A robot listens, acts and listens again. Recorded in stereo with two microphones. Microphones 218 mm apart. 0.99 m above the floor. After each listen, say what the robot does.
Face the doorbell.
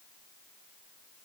Keep listening.
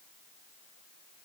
Keep listening.
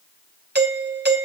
Turn 45° right.
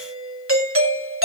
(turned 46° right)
Turn 85° right.
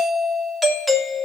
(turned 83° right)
Facing the doorbell.